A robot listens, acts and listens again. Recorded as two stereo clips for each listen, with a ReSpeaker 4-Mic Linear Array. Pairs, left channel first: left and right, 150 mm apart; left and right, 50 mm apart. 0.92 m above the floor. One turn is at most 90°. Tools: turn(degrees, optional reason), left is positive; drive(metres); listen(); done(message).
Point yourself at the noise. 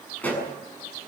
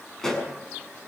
turn(degrees=30)
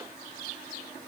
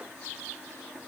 listen()
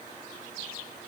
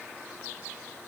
done("I heard a pop, but can't make it out now. It was about 20° right or 140° left.")